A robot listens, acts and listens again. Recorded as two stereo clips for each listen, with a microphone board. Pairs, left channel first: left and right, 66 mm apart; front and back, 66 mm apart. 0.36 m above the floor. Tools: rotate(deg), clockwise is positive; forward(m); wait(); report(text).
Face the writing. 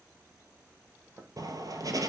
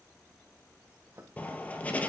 rotate(65)
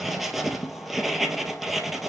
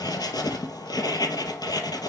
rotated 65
report("Facing the writing.")